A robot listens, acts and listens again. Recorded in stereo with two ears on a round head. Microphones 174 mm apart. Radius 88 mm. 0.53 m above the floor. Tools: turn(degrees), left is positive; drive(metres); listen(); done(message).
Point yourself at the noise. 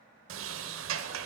turn(degrees=-90)
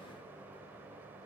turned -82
turn(degrees=-10)
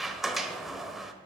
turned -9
done("Facing the sliding door, 1 to 2 m away.")